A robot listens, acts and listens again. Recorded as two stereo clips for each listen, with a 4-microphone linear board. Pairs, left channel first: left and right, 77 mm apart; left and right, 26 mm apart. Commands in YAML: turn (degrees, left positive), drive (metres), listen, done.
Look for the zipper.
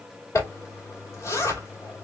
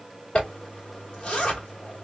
turn: 40
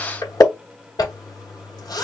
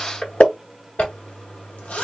turn: 95
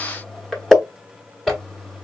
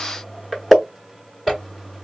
done: "Found it: a zipper, straight ahead."